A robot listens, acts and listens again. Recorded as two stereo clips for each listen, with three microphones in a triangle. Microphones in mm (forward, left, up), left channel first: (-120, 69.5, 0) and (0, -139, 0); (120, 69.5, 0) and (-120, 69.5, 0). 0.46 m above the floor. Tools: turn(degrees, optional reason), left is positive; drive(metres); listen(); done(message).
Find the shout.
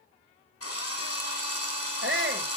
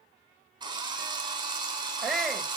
turn(degrees=-90, reason="The shout: 90° right.")
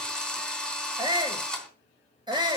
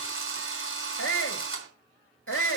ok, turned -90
turn(degrees=10, reason="The shout is now 10° left.")
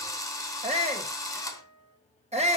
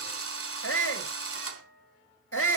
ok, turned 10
done("Found it: a shout, straight ahead.")